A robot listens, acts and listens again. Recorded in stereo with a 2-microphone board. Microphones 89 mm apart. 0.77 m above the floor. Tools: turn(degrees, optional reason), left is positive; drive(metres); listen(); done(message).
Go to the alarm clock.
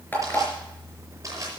turn(degrees=20, reason="The alarm clock: about 20° left or 160° left.")
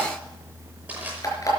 turn(degrees=140, reason="So it is at 140° left.")
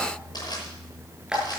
turn(degrees=-10, reason="The alarm clock is now 10° right.")
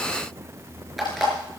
drive(metres=1.0)
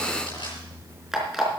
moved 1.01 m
drive(metres=1.0)
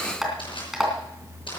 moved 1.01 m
drive(metres=1.0)
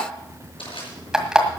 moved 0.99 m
drive(metres=1.0)
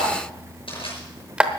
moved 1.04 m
turn(degrees=-10, reason="The alarm clock is now 10° right.")
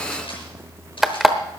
drive(metres=1.0)
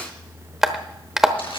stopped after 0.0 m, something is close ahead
done("Arrived at the alarm clock, straight ahead.")